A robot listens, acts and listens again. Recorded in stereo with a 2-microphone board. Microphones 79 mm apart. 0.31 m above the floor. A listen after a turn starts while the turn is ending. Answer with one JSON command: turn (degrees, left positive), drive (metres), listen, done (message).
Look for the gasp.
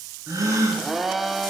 {"turn": -45}
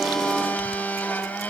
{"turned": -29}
{"listen": true}
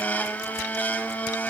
{"done": "I heard a gasp, but can't make it out now. It was about 15° right or 105° right."}